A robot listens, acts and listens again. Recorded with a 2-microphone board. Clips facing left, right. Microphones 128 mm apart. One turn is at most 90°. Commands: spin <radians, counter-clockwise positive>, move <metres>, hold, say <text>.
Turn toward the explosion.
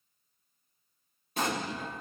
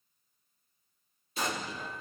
spin 1.05
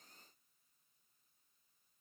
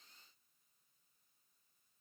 hold
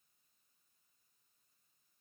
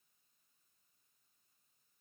say I heard an explosion, but can't make it out now. It was about straight ahead or 60° left.